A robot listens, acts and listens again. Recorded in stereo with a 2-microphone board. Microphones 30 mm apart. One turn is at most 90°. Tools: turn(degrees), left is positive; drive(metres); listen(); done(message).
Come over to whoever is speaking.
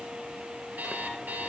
listen()
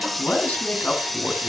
turn(degrees=70)
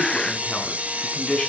turn(degrees=35)
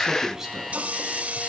turn(degrees=-10)
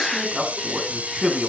drive(metres=1.0)
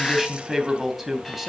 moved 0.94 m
drive(metres=1.0)
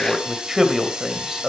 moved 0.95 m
turn(degrees=-10)
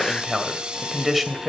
drive(metres=1.0)
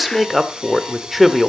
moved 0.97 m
drive(metres=1.0)
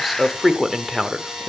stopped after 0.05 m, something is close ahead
done("I am next to the man speaking.")